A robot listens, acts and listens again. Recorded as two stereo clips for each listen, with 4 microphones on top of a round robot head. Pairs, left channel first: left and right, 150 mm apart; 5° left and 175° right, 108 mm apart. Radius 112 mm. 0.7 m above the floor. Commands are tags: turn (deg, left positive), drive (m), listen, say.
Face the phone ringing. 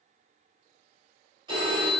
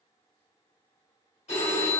<turn deg="-30"/>
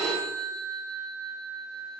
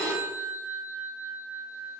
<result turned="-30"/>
<say>Facing the phone ringing.</say>